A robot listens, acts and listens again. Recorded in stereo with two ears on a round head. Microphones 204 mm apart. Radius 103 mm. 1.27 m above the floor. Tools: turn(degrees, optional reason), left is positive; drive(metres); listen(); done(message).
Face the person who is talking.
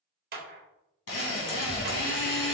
turn(degrees=30)
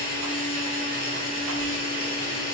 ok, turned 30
listen()
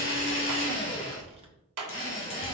turn(degrees=-25, reason="So it is at 25° right.")
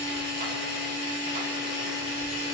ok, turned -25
listen()
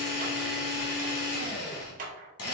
listen()
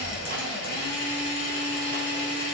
turn(degrees=10, reason="The child speaking is now 10° left.")
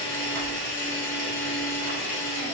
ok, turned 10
listen()
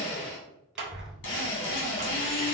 done("Facing the child speaking.")